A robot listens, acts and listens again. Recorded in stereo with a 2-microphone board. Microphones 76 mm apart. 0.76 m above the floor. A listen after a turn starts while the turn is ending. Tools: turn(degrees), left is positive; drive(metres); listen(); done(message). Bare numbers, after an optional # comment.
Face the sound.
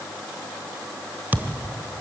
# The thud: about 20° right or 160° right.
turn(-20)
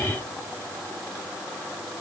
listen()
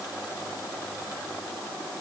done("I heard a thud, but can't make it out now. It was about straight ahead or 140° right.")